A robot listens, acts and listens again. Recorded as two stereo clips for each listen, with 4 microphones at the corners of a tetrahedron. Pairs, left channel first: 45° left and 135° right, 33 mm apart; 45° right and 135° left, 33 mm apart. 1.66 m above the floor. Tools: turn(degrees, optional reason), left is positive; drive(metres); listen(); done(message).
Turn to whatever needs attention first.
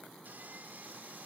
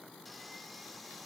listen()
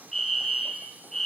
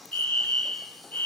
turn(degrees=-35, reason="The fire alarm: 35° right.")
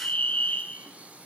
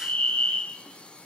done("Facing the fire alarm, 2 to 4 m away.")